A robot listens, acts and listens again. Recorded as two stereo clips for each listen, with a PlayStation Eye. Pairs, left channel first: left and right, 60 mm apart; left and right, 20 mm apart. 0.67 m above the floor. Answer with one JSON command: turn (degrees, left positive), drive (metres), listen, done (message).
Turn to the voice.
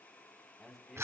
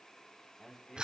{"turn": 30}
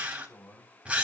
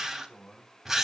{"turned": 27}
{"turn": 155}
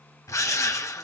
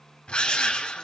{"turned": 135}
{"turn": 20}
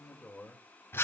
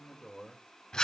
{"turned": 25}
{"turn": 15}
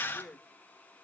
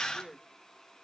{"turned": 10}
{"turn": 20}
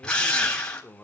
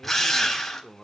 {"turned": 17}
{"turn": 20}
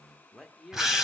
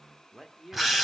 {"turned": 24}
{"done": "Found it: a man speaking, straight ahead, 1 to 2 m away."}